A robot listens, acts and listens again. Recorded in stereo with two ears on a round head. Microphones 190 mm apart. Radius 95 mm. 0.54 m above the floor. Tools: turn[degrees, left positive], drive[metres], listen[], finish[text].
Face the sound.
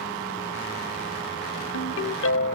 Thought: The ringtone: about 65° left or 115° left.
Action: turn[65]
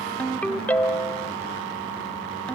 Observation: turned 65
Action: finish[Facing the ringtone, 1 to 2 m away.]